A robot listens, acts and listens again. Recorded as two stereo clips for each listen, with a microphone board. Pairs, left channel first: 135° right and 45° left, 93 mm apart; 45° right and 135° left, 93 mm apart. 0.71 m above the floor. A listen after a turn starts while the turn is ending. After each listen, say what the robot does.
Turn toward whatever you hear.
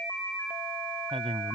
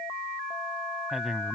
Turn 50° left.
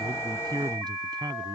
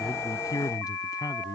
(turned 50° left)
Found it: a man speaking, straight ahead.